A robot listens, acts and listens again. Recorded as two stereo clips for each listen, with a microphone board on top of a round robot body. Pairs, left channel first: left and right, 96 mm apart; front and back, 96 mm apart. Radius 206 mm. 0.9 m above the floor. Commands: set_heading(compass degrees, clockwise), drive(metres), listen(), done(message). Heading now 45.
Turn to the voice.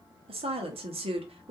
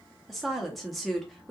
set_heading(135)
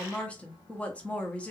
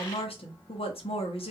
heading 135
set_heading(125)
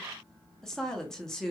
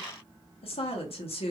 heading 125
done("Facing the woman speaking, under 1 m away.")